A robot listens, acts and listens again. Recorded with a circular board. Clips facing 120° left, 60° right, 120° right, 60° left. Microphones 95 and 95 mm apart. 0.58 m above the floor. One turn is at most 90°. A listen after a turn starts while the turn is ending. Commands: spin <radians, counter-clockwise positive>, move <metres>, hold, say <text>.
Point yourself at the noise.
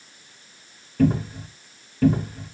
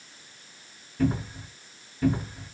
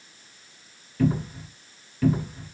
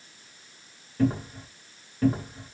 spin 1.57
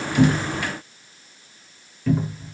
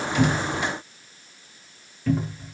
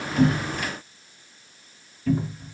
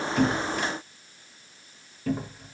spin 0.44
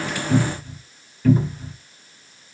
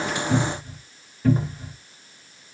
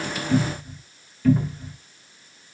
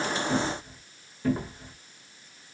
say Found it: a cupboard door, straight ahead, 1 to 2 m away.